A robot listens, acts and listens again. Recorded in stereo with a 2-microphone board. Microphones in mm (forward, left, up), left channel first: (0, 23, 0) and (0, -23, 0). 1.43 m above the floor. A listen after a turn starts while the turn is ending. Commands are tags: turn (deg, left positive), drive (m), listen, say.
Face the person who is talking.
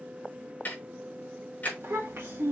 <turn deg="-70"/>
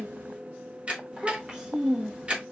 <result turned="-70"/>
<turn deg="-25"/>
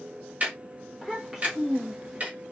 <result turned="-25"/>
<turn deg="-15"/>
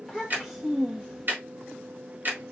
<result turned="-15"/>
<say>Facing the child speaking.</say>